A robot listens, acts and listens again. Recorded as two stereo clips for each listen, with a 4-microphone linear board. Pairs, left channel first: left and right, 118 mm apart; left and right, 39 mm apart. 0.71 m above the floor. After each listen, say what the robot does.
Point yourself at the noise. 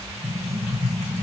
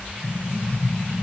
Turn 30° left.
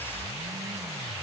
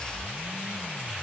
Keep listening.
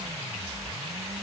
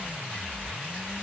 I heard an explosion, but can't make it out now. It was about 15° right or 135° left.